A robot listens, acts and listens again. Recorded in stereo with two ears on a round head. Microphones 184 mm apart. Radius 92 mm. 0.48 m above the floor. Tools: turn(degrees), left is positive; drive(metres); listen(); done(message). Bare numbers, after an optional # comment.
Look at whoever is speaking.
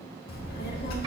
# The child speaking: about 50° left or 130° left.
turn(50)
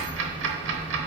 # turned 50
# So it is at 10° left.
turn(10)
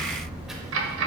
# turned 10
done("Found it: a child speaking, straight ahead.")